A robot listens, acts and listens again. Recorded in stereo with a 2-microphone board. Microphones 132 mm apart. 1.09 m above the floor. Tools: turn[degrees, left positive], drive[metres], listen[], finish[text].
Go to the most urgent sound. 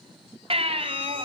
Thought: The baby crying: about 45° right or 135° right.
Action: turn[-45]
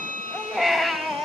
Action: drive[1.0]
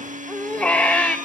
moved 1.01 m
Thought: The baby crying is now 10° left.
Action: turn[10]
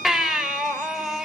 Action: drive[1.0]
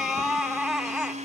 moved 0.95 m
Action: drive[1.0]
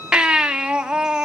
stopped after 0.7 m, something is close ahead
Action: finish[I am next to the baby crying.]